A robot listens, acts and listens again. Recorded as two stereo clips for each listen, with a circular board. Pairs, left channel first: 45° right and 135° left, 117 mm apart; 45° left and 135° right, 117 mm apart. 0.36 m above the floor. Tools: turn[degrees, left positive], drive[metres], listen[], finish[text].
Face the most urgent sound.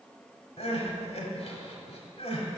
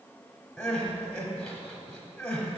Thought: The crying: 35° right.
Action: turn[-35]
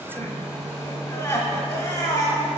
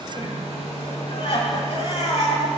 Thought: The crying is now 10° left.
Action: turn[10]
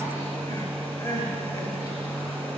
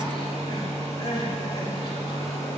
Action: finish[Found it: crying, straight ahead.]